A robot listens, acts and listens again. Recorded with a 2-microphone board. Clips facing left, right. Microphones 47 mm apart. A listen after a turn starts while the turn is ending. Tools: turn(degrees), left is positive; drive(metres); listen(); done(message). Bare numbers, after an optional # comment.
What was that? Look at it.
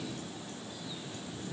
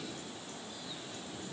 listen()
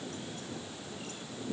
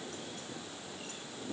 listen()
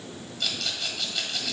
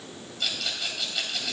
turn(-30)
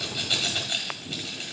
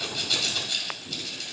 # So it is at 25° left.
turn(25)
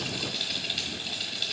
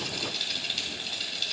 done("Facing the rattle, 1 to 2 m away.")